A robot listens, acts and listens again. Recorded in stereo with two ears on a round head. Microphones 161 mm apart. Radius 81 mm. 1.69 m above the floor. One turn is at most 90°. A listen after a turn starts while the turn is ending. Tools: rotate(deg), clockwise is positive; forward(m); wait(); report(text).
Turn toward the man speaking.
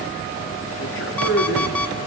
rotate(-70)
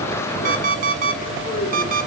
rotate(-35)
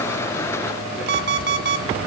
wait()
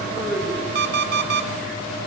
report("Facing the man speaking.")